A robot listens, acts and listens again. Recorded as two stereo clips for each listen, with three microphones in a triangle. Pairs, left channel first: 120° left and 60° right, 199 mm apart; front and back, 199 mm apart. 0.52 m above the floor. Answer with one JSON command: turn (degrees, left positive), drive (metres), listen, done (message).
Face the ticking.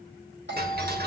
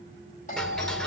{"turn": -85}
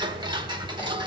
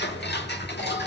{"done": "Found it: ticking, straight ahead, 1 to 2 m away."}